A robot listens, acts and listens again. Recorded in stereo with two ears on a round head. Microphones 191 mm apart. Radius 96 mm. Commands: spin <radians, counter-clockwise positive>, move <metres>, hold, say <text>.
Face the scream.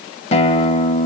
hold
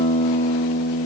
hold
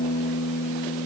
say I can't make out a scream to turn to.